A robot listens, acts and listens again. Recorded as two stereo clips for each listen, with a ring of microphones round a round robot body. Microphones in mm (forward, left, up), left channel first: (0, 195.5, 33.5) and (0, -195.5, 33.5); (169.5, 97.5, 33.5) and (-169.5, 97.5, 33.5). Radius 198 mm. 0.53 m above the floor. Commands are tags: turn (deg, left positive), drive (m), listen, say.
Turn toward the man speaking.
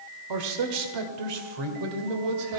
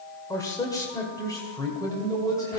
<turn deg="-80"/>
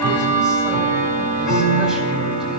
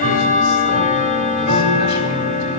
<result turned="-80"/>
<listen/>
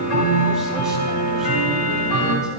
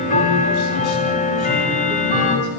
<listen/>
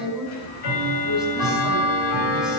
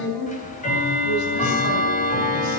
<say>Facing the man speaking, over 4 m away.</say>